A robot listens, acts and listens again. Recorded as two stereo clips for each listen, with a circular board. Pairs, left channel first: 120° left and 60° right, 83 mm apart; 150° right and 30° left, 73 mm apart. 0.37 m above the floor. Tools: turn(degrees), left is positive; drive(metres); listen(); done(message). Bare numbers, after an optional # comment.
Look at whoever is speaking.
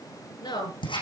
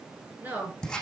# The woman speaking: 95° left.
turn(95)
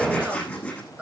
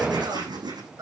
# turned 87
# The woman speaking is now 10° left.
turn(10)
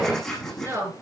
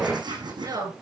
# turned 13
done("Found it: a woman speaking, straight ahead, over 4 m away.")